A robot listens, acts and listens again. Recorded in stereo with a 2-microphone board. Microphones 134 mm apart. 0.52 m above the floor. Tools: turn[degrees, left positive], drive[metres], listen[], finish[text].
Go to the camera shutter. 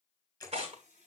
Thought: The camera shutter: about 25° left or 155° left.
Action: turn[25]
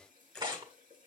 Action: drive[1.0]
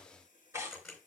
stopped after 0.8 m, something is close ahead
Action: finish[Blocked. The camera shutter is further on, straight ahead.]